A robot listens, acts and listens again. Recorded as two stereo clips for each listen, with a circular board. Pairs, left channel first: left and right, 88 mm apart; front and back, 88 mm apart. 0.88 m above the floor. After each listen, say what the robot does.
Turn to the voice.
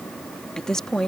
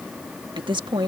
Turn 175° left.
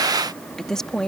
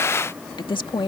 Turn 10° left.
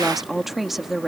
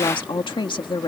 Facing the woman speaking.